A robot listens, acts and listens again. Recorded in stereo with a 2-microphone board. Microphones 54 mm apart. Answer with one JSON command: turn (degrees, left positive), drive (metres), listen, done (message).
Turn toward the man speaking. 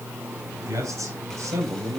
{"turn": -90}
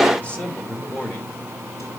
{"turn": 35}
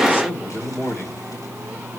{"turn": 45}
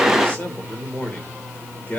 {"turn": 30}
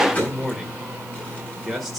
{"done": "Found it: a man speaking, straight ahead."}